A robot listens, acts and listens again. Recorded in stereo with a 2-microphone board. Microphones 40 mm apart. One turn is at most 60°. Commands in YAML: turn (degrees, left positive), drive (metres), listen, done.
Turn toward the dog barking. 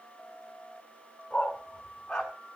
turn: 15
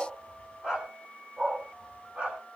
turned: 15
turn: -25
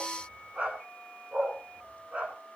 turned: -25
turn: -30
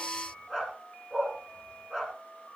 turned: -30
done: "Found it: a dog barking, straight ahead."